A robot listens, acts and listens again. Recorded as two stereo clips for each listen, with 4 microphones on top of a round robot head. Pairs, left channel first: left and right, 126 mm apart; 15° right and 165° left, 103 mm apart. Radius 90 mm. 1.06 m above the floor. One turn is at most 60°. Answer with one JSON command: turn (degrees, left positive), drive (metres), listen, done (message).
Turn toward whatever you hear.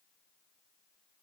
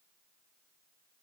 {"listen": true}
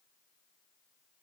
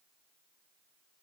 {"listen": true}
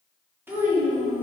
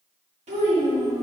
{"turn": -60}
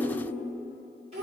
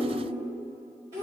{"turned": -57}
{"turn": -60}
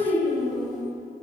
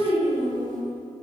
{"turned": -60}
{"turn": -60}
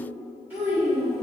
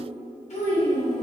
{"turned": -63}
{"turn": -10}
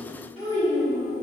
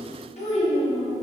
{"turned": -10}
{"done": "Found it: a child speaking, straight ahead."}